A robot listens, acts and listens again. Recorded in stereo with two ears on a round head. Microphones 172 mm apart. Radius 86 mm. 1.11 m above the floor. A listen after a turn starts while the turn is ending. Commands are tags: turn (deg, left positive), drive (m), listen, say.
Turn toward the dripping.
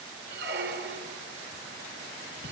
<listen/>
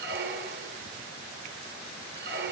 <listen/>
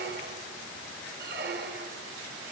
<say>I can't make out dripping, only a squeak.</say>